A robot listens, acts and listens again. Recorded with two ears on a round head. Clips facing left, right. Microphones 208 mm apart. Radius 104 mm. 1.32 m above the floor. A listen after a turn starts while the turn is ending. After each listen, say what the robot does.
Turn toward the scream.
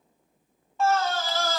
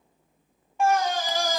Turn 30° right.
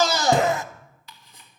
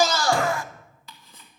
Turn 20° left.
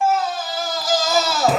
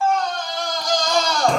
Found it: a scream, straight ahead, under 1 m away.